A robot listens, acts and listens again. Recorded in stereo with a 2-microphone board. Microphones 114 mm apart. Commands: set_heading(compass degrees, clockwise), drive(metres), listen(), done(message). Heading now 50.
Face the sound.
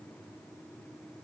listen()
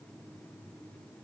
listen()
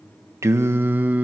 set_heading(80)
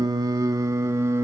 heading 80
set_heading(105)
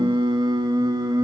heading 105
set_heading(250)
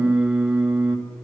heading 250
set_heading(260)
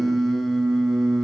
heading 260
done("Facing the singing.")